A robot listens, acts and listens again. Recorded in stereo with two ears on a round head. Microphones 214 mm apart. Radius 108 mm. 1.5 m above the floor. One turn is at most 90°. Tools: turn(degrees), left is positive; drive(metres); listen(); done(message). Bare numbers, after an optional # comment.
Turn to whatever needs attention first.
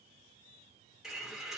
listen()
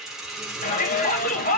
# The shout: about 35° left or 145° left.
turn(35)
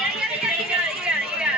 done("Found it: a shout, straight ahead, 1 to 2 m away.")